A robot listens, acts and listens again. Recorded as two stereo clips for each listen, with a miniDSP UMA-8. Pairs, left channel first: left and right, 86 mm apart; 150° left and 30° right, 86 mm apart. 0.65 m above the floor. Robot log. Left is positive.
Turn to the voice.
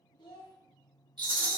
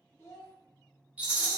note: The child speaking: 95° left.
cmd yaw +95
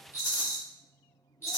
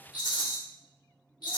cmd idle
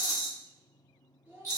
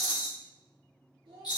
note: The child speaking is now 20° right.
cmd yaw -20
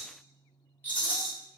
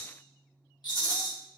cmd idle
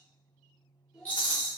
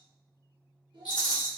end: Found it: a child speaking, straight ahead, 1 to 2 m away.